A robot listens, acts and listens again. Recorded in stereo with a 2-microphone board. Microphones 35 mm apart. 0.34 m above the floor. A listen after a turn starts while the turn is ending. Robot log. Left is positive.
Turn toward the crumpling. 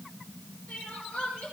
cmd idle
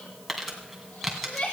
cmd yaw +30
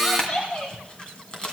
note: So it is at 155° left.
cmd yaw +155
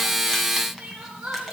cmd idle
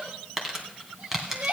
note: The crumpling is now 10° right.
cmd yaw -10
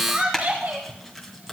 end: Found it: crumpling, straight ahead, 2 to 4 m away.